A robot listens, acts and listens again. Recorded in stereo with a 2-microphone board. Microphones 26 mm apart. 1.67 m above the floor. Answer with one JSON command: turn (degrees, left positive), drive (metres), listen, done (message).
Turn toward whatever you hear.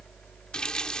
{"turn": 30}
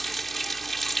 {"done": "Found it: a running tap, straight ahead."}